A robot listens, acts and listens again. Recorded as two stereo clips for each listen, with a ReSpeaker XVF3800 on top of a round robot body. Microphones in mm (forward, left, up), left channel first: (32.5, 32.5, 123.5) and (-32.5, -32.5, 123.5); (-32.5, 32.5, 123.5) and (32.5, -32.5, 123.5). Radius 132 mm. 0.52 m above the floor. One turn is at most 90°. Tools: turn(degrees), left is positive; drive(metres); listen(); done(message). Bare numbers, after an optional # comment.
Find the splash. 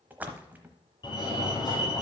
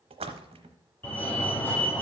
# The splash: 60° right.
turn(-60)
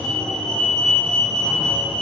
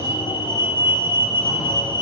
done("I heard a splash from this way, but can't make it out now.")